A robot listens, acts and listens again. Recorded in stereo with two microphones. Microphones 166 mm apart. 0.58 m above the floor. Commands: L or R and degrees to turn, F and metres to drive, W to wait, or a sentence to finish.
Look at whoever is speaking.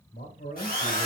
L65
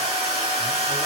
W
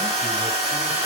W
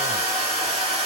I heard a man speaking, but can't make it out now. It was about straight ahead or 50° left.